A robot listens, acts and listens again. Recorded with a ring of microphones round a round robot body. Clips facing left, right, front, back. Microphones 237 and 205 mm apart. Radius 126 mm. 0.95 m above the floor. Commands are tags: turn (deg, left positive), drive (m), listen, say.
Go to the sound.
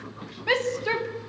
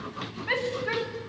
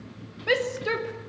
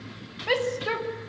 <turn deg="65"/>
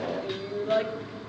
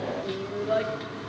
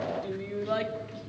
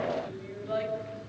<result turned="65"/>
<drive m="1.0"/>
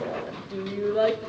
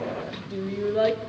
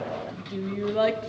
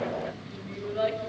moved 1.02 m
<drive m="1.0"/>
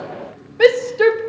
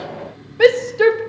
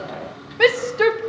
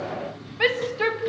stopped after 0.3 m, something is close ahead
<say>I am next to the shout.</say>